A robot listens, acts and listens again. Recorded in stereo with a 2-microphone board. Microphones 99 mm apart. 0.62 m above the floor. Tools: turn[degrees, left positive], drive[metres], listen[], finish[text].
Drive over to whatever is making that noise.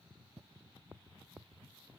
Action: listen[]
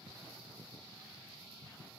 Action: listen[]
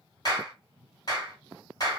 Thought: The clap: about 40° left or 140° left.
Action: turn[40]
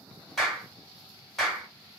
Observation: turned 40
Action: drive[1.0]
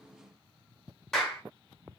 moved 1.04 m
Action: drive[1.0]
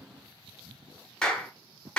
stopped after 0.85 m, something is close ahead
Thought: The clap is now 10° left.
Action: turn[10]
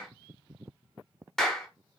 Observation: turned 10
Action: finish[Arrived at the clap, straight ahead.]